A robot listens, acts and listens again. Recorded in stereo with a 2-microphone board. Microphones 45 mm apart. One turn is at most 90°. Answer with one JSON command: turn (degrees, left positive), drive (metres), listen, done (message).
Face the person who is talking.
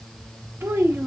{"turn": -60}
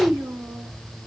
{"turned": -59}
{"turn": -50}
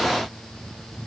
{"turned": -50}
{"listen": true}
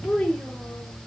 {"turn": 10}
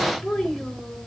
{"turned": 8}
{"done": "Facing the child speaking."}